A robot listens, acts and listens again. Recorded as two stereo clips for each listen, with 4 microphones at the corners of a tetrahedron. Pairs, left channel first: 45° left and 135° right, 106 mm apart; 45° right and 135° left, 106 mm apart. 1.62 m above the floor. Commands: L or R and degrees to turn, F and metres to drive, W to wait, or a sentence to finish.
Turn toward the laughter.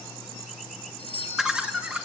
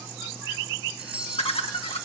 R60
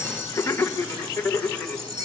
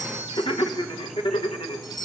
R30
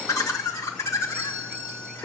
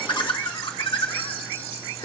R20
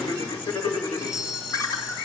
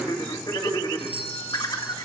Facing the laughter.